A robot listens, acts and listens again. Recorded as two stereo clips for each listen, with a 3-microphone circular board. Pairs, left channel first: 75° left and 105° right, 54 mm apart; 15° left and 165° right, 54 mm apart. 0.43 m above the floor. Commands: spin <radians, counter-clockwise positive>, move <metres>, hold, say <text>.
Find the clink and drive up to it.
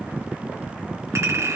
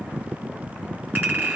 spin -1.92
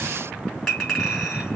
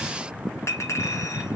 move 1.0
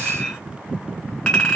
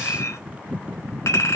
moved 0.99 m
move 1.0
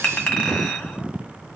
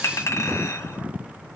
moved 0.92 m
move 1.0
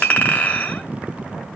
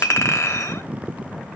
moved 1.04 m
spin 0.26
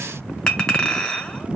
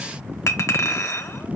move 1.0
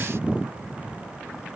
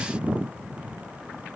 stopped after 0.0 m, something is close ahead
hold
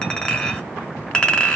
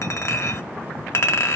say Arrived at the clink, straight ahead.